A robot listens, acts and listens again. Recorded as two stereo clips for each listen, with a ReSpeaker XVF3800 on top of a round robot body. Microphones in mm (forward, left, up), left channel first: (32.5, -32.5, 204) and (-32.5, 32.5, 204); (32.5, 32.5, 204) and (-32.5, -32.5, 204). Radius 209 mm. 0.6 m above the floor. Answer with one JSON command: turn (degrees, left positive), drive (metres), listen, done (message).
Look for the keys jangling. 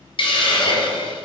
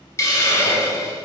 {"listen": true}
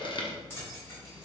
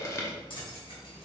{"turn": 20}
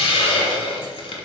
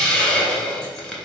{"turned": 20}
{"listen": true}
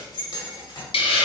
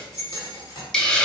{"done": "Found it: keys jangling, straight ahead."}